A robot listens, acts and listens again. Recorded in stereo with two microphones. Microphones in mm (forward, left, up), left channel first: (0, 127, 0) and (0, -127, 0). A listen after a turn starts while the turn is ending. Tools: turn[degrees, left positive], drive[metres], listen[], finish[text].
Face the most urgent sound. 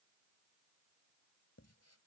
Action: listen[]
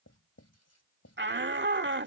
Thought: The shout: about 45° right or 135° right.
Action: turn[-45]
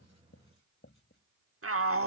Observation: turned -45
Thought: So it is at 80° right.
Action: turn[-80]
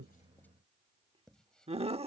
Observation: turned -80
Thought: The shout is now 25° right.
Action: turn[-25]
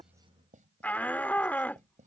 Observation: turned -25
Thought: The shout is now 10° left.
Action: turn[10]
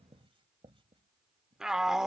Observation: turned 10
Action: finish[Found it: a shout, straight ahead.]